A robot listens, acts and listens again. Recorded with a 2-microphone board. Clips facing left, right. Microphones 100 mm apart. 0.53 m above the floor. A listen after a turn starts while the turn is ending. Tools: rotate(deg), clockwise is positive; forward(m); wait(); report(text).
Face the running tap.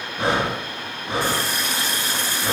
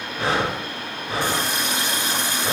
rotate(20)
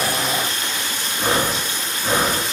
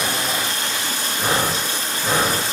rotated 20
rotate(140)
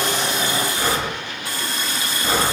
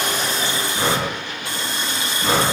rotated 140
rotate(30)
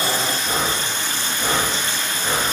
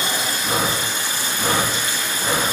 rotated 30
rotate(10)
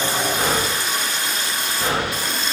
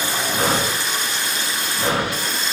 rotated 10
report("Facing the running tap.")